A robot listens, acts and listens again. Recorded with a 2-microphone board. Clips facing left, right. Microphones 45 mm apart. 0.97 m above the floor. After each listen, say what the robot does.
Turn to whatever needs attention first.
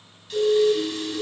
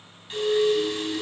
Turn 75° left.
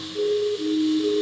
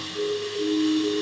Turn 30° left.
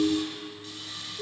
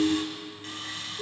Found it: a siren, straight ahead, 2 to 4 m away.